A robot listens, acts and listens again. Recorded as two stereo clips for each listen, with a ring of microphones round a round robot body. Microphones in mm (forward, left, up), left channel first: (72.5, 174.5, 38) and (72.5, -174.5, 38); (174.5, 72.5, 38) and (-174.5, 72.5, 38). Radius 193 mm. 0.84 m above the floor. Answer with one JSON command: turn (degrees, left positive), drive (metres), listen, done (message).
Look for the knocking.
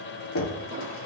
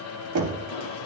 {"turn": 145}
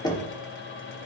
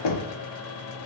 {"turn": 10}
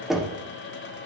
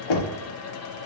{"done": "Found it: knocking, straight ahead, 1 to 2 m away."}